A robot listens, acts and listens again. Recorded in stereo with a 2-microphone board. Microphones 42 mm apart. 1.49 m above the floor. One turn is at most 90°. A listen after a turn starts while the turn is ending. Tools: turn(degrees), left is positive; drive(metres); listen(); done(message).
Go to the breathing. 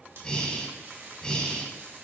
turn(degrees=20)
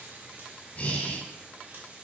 turn(degrees=90)
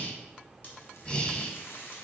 turn(degrees=25)
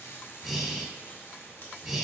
drive(metres=1.0)
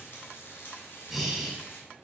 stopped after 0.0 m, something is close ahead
done("Blocked. The breathing is further on, straight ahead.")